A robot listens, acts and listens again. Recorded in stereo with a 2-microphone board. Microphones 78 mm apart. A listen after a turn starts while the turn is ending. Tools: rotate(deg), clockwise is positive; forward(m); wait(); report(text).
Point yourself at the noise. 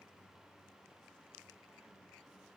wait()
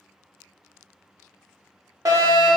rotate(50)
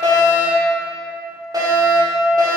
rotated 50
rotate(65)
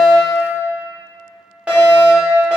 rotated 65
rotate(15)
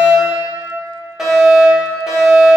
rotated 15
report("Facing the fire alarm.")